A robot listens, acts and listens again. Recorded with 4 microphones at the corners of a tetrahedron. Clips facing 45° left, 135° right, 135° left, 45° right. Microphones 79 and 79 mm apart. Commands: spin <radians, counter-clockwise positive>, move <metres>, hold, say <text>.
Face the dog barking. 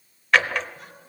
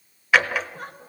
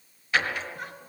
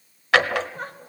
hold
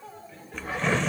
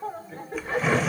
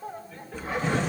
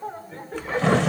spin 1.40
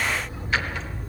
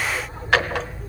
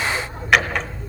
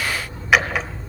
spin 0.17
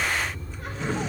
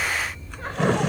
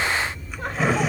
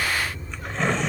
say Found it: a dog barking, straight ahead, 2 to 4 m away.